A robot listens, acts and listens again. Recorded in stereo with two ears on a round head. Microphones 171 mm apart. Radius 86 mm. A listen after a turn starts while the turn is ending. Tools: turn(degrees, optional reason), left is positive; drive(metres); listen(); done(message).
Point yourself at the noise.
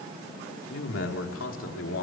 turn(degrees=75, reason="The man speaking: about 75° left or 105° left.")
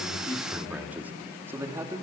turn(degrees=-15, reason="So it is at 15° right.")
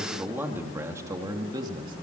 turn(degrees=-25, reason="The man speaking is now 25° right.")
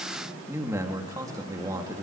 turn(degrees=-20, reason="The man speaking is now 20° right.")
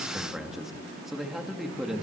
done("Found it: a man speaking, straight ahead, 2 to 4 m away.")